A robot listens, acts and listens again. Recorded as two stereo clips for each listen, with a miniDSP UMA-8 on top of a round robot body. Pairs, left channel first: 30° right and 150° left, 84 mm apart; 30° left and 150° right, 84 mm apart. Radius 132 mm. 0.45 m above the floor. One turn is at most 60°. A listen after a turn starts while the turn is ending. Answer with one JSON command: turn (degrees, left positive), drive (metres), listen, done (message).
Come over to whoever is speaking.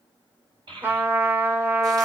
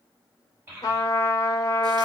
{"turn": 60}
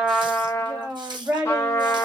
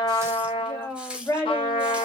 {"turn": 60}
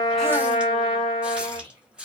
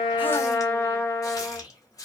{"turn": 30}
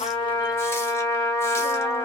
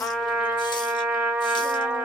{"listen": true}
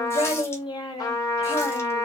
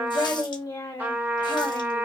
{"turn": -20}
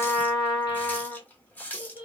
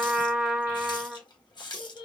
{"drive": 1.0}
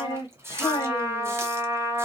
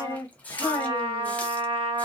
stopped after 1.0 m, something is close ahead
{"turn": -15}
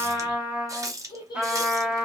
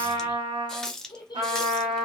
{"done": "I am next to the child speaking."}